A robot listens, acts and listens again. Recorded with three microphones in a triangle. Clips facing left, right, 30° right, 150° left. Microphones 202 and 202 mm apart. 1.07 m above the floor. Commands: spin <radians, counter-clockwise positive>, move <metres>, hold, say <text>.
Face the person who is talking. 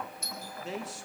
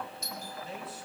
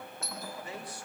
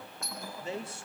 spin 1.48
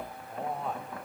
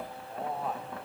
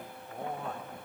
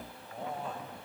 say Facing the man speaking, 2 to 4 m away.